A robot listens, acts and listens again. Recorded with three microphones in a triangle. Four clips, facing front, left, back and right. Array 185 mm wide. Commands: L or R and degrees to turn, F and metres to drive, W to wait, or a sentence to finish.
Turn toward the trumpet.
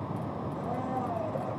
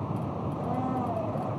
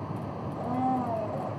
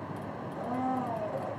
W
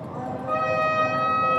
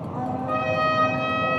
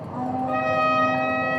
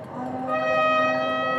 L120
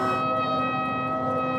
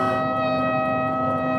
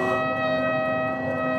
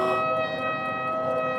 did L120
L30
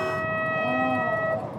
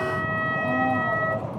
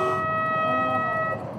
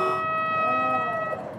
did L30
R10
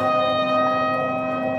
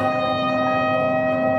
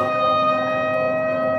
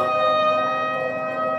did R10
Found it: a trumpet, straight ahead.